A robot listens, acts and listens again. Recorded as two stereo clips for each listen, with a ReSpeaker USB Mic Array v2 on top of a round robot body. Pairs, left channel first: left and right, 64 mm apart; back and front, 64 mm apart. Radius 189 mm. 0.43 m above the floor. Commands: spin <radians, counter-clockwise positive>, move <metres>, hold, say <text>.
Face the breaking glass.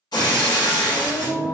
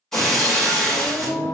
spin 1.75
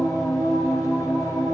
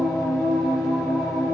say I heard breaking glass from this way, but can't make it out now.